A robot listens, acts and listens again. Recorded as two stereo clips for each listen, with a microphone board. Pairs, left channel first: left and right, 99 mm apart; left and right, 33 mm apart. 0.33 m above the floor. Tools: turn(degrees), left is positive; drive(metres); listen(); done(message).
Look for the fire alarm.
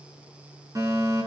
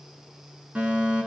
turn(degrees=-35)
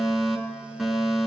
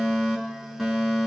done("Found it: a fire alarm, straight ahead.")